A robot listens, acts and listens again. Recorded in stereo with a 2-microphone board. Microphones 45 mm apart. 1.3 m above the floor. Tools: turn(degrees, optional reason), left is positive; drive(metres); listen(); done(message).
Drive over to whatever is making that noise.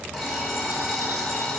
turn(degrees=-30)
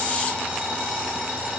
turn(degrees=-145, reason="So it is at 145° right.")
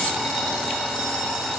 turn(degrees=20, reason="The alarm clock is now 20° left.")
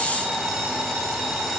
drive(metres=1.0)
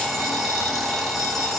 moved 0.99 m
drive(metres=1.0)
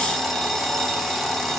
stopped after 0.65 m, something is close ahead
turn(degrees=10, reason="The alarm clock is now 10° left.")
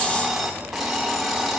done("Arrived at the alarm clock, straight ahead.")